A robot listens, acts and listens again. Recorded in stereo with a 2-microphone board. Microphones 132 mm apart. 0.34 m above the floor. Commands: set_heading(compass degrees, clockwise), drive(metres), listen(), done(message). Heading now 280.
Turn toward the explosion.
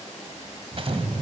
set_heading(330)
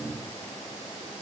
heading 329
listen()
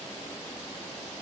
done("I heard an explosion, but can't make it out now. It was about straight ahead or 80° right.")